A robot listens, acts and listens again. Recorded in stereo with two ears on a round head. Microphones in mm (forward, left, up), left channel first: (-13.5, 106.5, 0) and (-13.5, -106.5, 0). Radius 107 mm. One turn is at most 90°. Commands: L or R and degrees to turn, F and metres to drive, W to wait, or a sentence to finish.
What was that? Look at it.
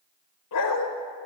L90
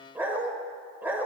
R10
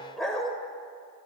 Facing the dog barking, 1 to 2 m away.